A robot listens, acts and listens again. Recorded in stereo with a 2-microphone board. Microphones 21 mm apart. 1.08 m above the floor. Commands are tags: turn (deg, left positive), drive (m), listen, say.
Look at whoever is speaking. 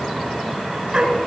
<listen/>
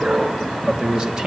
<turn deg="-30"/>
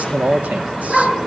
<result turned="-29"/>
<turn deg="-115"/>
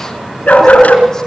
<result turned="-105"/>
<turn deg="-10"/>
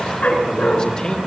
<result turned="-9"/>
<turn deg="35"/>
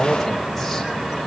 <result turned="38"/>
<say>Facing the man speaking.</say>